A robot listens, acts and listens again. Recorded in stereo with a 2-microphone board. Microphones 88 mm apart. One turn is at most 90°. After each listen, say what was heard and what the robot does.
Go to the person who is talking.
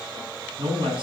The man speaking: about 65° right or 115° right. Turn 65° right.
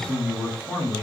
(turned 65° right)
Drive 1.0 m forward.
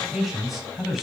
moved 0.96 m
Drive 1.0 m forward.
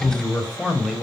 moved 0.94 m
Drive 1.0 m forward.
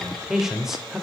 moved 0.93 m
Drive 1.0 m forward.
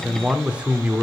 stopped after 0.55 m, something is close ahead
The man speaking is now 20° right. Turn 20° right.
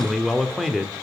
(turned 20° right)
I am next to the man speaking.